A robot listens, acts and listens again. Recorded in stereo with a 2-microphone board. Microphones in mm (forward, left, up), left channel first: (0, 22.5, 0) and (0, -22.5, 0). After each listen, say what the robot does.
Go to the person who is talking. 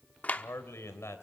Turn 90° left.
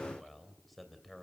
Drive 1.0 m forward.
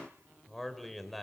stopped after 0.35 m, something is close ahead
Something is in my way. I am facing the man speaking but have not reached it.